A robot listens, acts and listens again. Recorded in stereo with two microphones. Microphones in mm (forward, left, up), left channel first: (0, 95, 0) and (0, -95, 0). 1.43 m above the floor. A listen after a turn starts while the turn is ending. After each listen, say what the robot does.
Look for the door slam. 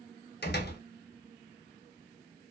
Turn 60° left.
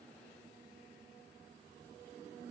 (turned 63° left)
Keep listening.
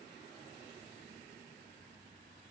I heard a door slam, but can't make it out now. It was about 5° right or 60° left.